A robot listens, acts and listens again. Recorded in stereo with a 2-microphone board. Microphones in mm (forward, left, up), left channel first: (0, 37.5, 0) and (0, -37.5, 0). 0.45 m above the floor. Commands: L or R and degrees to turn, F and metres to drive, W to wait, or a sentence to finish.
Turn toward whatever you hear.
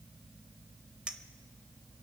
R30
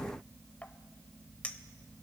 L20
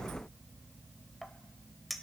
Found it: a clink, straight ahead, under 1 m away.